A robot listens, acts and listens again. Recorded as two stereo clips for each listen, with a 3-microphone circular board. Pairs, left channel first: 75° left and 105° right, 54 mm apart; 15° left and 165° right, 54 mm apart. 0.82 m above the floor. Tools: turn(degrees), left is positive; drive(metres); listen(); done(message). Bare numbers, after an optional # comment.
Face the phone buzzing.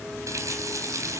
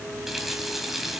listen()
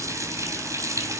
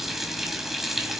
listen()
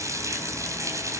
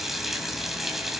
done("I can't make out a phone buzzing to turn to.")